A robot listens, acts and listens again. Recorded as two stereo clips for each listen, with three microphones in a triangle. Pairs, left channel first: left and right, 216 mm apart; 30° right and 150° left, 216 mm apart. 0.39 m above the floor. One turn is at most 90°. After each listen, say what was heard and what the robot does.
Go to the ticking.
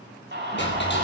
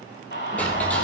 The ticking: 55° left. Turn 55° left.
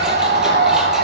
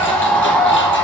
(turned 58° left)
Keep listening.
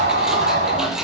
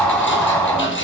Drive 1.0 m forward.
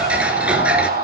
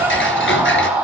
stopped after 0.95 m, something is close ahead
Arrived at the ticking, straight ahead.